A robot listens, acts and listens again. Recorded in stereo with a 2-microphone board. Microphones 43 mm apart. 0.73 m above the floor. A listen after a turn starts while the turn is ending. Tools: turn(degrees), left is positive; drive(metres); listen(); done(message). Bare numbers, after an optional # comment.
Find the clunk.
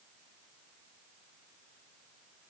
listen()
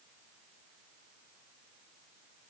listen()
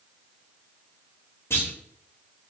turn(90)
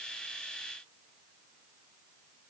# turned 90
done("I heard a clunk from this way, but can't make it out now.")